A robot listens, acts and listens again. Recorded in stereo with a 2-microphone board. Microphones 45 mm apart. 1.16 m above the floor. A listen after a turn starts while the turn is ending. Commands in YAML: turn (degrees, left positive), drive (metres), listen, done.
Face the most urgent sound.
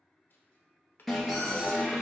turn: 30
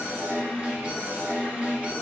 turn: -30
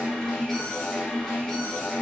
turn: 10
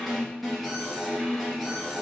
done: "Found it: an alarm, straight ahead."